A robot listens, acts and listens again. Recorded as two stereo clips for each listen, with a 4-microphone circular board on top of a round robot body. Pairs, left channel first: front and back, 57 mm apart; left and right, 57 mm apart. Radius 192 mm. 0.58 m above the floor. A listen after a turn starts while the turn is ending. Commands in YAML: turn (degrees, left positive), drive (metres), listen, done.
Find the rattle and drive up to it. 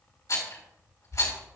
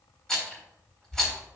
turn: 10
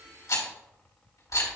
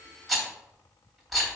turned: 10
drive: 1.0
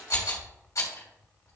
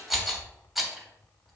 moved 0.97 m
drive: 1.0
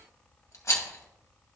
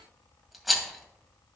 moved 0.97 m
drive: 1.0
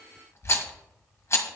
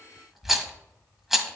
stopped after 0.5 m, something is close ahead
done: "Arrived at the rattle, straight ahead."